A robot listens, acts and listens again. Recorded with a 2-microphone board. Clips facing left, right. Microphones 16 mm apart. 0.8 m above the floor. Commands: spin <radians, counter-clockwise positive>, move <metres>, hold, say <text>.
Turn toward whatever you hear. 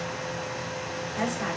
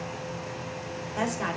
spin -0.35
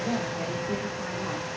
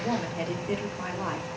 spin -2.36
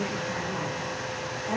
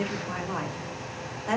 spin -0.61
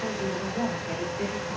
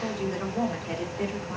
spin -0.17
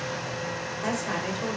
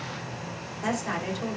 say Facing the woman speaking, 2 to 4 m away.